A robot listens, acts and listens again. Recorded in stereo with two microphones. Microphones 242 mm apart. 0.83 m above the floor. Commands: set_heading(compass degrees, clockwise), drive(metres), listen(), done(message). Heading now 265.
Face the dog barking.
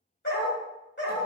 set_heading(220)
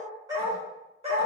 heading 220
set_heading(250)
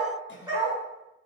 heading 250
set_heading(270)
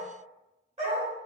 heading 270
set_heading(300)
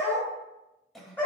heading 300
done("Found it: a dog barking, straight ahead, 1 to 2 m away.")